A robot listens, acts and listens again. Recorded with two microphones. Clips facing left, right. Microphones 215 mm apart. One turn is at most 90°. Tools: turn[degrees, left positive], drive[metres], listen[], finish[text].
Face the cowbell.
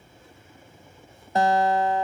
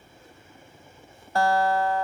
Action: listen[]
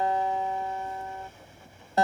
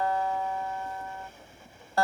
Action: listen[]
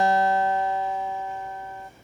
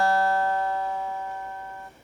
Action: finish[I can't make out a cowbell to turn to.]